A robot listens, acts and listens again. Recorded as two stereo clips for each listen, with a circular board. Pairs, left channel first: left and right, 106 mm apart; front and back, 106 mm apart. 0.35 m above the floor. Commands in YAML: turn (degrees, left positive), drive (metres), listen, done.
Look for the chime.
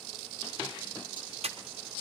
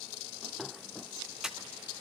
listen: true
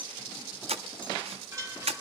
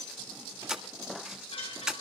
turn: -30
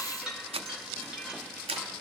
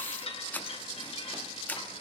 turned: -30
turn: -10
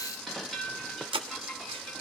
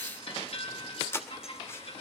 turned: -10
done: "Facing the chime."